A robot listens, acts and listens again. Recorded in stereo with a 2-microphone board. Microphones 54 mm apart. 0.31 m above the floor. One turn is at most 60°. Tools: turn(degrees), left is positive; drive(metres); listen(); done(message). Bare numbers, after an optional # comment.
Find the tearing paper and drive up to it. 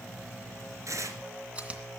# The tearing paper: about 70° right or 110° right.
turn(-60)
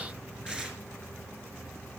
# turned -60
# So it is at 15° right.
turn(-15)
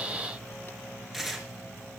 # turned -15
drive(1.0)
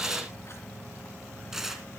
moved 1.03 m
# The tearing paper is now 10° right.
turn(-10)
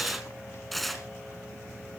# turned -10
drive(1.0)
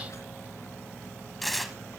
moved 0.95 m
drive(1.0)
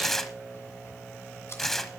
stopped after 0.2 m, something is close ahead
# The tearing paper is now 10° left.
turn(10)
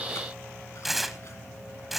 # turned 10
done("Arrived at the tearing paper, straight ahead.")